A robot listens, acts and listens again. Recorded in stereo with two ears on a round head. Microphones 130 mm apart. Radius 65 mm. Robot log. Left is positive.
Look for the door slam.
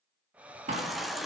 note: The door slam: about 50° right or 130° right.
cmd yaw -50
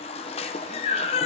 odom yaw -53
cmd idle
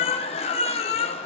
end: I heard a door slam, but can't make it out now. It was about straight ahead or 75° right.